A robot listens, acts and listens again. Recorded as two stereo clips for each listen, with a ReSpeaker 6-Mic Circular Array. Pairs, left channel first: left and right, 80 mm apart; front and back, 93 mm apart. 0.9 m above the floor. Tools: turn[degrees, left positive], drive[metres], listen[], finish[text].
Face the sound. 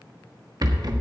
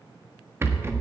Thought: The rattle: 120° right.
Action: turn[-120]
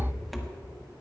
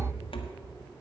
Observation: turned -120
Action: finish[Facing the rattle, 1 to 2 m away.]